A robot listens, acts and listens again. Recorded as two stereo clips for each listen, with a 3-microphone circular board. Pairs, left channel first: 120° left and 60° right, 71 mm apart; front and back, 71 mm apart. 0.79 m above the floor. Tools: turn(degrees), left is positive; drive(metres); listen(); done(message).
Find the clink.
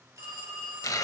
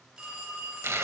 listen()
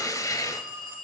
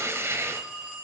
listen()
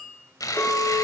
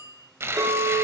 turn(degrees=180)
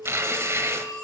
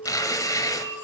turn(degrees=30)
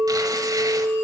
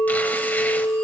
turn(degrees=-20)
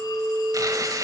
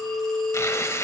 done("Facing the clink, 2 to 4 m away.")